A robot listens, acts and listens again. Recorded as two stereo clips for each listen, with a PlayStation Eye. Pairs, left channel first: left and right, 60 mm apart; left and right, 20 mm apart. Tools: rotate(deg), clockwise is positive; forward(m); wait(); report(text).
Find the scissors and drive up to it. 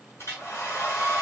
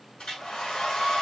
wait()
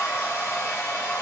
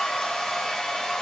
wait()
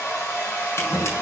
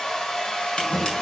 rotate(-50)
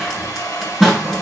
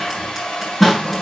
forward(1.0)
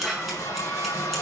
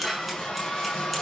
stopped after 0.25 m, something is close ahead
report("Blocked. The scissors is further on, straight ahead.")